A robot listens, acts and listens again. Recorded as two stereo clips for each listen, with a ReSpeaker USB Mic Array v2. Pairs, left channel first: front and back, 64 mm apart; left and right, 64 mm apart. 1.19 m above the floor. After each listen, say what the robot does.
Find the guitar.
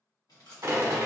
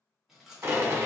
Keep listening.
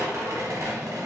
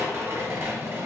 Keep listening.
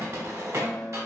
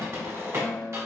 Turn 55° left.
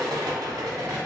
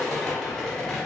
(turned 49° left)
Keep listening.
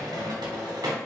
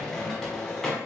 Keep listening.
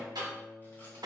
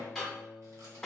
Found it: a guitar, straight ahead, 1 to 2 m away.